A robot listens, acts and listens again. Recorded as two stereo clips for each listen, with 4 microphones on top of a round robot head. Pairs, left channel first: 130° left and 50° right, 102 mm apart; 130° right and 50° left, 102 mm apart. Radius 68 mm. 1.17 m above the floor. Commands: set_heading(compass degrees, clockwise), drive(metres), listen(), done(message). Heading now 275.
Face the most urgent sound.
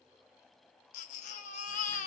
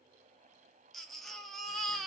set_heading(135)
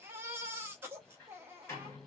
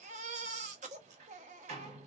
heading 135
set_heading(110)
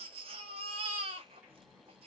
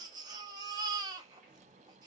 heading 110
set_heading(120)
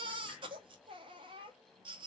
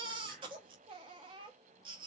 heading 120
done("Found it: a baby crying, straight ahead, under 1 m away.")